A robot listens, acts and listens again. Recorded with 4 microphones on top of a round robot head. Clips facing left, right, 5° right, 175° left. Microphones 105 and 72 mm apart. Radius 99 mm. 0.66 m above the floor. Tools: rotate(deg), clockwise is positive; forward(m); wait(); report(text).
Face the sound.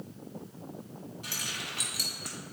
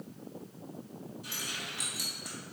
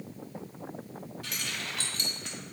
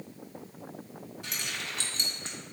rotate(-110)
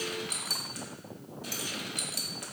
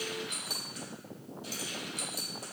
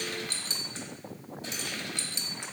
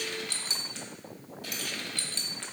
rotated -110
rotate(-65)
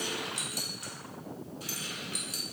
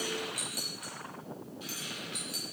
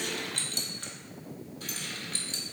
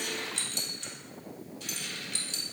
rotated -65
rotate(-40)
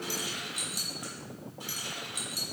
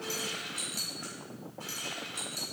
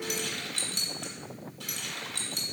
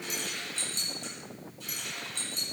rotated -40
rotate(-15)
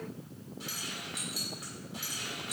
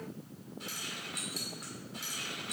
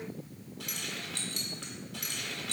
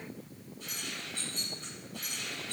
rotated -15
report("Facing the keys jangling.")